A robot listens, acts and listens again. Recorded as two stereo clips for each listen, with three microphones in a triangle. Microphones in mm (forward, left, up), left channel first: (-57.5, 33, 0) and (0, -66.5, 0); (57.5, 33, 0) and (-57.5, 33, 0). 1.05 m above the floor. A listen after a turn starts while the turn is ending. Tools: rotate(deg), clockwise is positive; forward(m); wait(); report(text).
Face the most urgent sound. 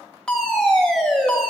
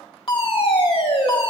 rotate(-35)
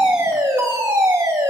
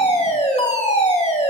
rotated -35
report("Facing the fire alarm, 2 to 4 m away.")